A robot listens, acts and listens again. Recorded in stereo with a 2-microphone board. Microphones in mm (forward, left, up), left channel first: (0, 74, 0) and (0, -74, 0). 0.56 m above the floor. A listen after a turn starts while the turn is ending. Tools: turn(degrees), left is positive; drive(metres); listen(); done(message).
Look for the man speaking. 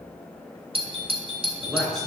turn(degrees=30)
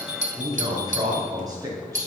turn(degrees=-25)
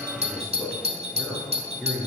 done("Facing the man speaking.")